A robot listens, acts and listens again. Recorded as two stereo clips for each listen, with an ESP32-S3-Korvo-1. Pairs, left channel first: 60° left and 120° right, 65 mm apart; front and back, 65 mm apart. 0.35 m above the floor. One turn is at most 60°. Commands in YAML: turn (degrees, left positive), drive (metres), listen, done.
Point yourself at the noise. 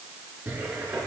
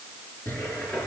turn: -60
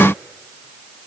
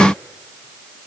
listen: true
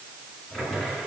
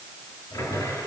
turn: -20
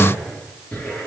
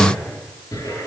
done: "Facing the cupboard door."